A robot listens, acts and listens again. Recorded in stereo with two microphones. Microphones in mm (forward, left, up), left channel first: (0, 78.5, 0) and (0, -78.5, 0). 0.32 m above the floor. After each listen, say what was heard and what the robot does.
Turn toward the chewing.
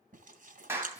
The chewing: about 60° right or 120° right. Turn 60° right.
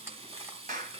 So it is at 20° right. Turn 20° right.
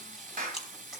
Facing the chewing.